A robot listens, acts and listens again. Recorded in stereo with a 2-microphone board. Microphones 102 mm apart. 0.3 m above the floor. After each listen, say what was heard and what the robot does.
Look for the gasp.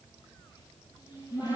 Keep listening.
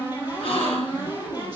The gasp: about 70° left or 110° left. Turn 70° left.
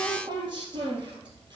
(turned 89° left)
Keep listening.
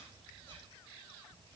I heard a gasp, but can't make it out now. It was about 20° right or 20° left.